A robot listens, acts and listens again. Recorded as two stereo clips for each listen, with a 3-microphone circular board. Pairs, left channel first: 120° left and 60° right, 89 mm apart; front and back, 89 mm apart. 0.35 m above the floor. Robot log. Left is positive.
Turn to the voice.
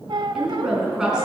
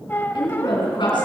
note: The woman speaking: 25° left.
cmd yaw +25
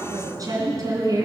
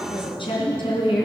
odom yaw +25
note: The woman speaking is now 10° right.
cmd yaw -10
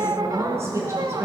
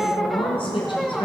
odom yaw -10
end: Facing the woman speaking, 2 to 4 m away.